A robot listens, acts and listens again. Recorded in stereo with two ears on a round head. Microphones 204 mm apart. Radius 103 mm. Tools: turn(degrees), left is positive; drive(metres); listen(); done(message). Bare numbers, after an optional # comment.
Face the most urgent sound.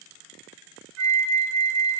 listen()
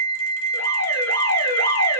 # The alarm: about 45° left or 135° left.
turn(45)
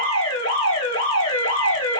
# So it is at 80° left.
turn(80)
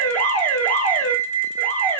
done("Facing the alarm, 1 to 2 m away.")